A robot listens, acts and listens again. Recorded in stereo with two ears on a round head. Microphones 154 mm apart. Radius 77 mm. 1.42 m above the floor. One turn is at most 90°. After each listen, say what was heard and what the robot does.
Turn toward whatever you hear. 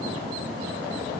Keep listening.
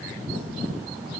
Keep listening.
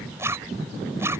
The zipper: about 15° right or 165° right. Turn 15° right.
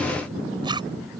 So it is at 150° right. Turn 90° right.
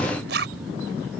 The zipper is now 65° right. Turn 65° right.
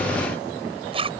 The zipper is now 30° right. Turn 30° right.
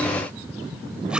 Keep listening.
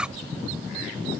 Facing the zipper.